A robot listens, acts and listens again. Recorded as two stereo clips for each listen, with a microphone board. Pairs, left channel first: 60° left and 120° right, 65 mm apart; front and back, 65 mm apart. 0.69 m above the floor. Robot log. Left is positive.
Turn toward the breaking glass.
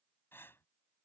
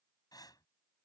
cmd idle
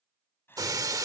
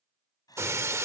note: The breaking glass: 135° right.
cmd yaw -135
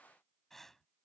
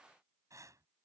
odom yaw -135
end: Facing where the breaking glass came from. I can't hear it now.